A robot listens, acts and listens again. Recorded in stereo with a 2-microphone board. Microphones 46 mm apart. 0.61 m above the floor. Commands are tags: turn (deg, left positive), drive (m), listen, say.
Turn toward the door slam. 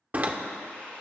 <turn deg="-30"/>
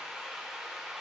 <listen/>
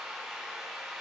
<say>I heard a door slam, but can't make it out now. It was about straight ahead or 120° right.</say>